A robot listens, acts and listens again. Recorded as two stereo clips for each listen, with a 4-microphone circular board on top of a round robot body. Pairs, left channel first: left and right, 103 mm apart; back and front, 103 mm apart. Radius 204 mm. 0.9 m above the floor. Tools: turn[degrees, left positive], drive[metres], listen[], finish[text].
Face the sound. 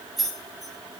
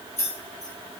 Thought: The keys jangling: straight behind.
Action: turn[180]
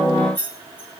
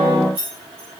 Thought: The keys jangling is now 20° left.
Action: turn[20]
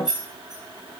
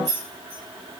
Action: finish[Found it: keys jangling, straight ahead.]